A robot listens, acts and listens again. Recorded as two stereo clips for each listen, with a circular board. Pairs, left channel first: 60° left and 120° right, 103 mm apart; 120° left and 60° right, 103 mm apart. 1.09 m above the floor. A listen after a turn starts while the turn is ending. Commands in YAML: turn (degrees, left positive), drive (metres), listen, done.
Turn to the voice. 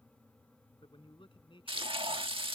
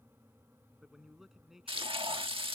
turn: 25
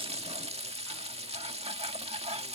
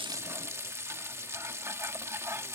listen: true
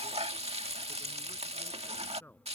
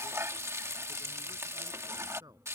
turn: -10
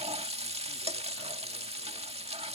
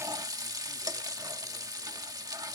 listen: true
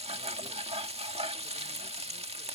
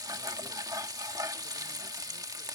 listen: true
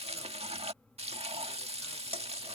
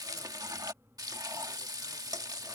done: "I heard a man speaking from this way, but can't make it out now."